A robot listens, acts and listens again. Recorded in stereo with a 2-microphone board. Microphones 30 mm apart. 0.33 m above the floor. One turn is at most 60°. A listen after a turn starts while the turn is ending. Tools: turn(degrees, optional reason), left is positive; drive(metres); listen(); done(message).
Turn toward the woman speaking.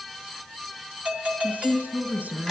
turn(degrees=-60, reason="The woman speaking: about 70° right or 110° right.")
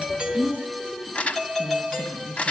turn(degrees=-40, reason="So it is at 40° right.")
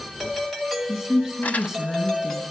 turn(degrees=-20, reason="The woman speaking is now 20° right.")
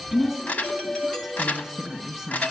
done("Facing the woman speaking, 2 to 4 m away.")